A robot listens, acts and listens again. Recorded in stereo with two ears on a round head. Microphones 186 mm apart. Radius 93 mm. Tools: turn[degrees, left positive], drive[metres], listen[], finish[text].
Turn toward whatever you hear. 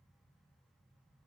Action: listen[]
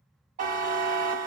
Thought: The buzzer: about 40° right or 140° right.
Action: turn[-40]
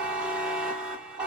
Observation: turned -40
Action: finish[Found it: a buzzer, straight ahead, under 1 m away.]